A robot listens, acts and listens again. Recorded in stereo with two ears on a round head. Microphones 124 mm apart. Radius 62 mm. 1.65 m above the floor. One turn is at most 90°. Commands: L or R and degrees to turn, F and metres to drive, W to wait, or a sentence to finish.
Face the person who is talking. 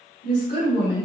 L65
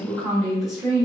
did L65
Found it: a woman speaking, straight ahead, 1 to 2 m away.